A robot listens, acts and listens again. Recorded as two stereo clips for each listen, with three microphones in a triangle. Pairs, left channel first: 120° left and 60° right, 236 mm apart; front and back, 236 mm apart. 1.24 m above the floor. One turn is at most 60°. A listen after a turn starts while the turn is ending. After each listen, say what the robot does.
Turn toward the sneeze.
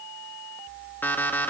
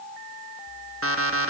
Keep listening.
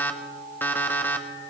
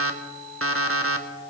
Keep listening.
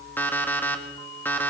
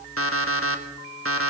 I can't make out a sneeze, only an alarm clock.